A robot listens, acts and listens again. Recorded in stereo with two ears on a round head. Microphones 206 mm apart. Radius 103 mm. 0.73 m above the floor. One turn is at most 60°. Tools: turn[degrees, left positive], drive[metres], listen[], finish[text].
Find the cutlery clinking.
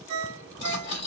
Thought: The cutlery clinking: about 55° left or 125° left.
Action: turn[55]
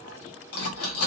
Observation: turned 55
Thought: So it is at 70° left.
Action: turn[60]
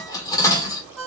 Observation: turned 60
Thought: The cutlery clinking is now 15° left.
Action: turn[15]
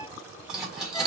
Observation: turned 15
Action: finish[Facing the cutlery clinking.]